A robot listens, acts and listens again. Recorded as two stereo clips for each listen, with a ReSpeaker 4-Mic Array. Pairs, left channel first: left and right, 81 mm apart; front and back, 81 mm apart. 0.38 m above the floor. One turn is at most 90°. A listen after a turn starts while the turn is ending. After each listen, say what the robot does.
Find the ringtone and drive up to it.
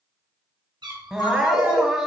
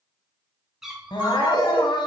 Turn 90° left.
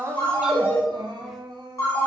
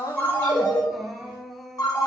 Turn 35° left.
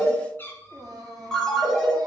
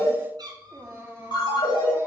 Drive 1.0 m forward.
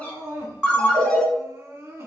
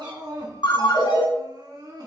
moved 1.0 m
Turn 10° left.
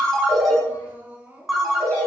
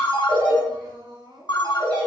Drive 1.0 m forward.
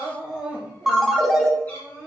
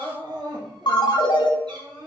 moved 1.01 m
Drive 1.0 m forward.
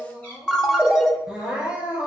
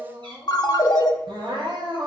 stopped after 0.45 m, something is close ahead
Arrived at the ringtone, straight ahead.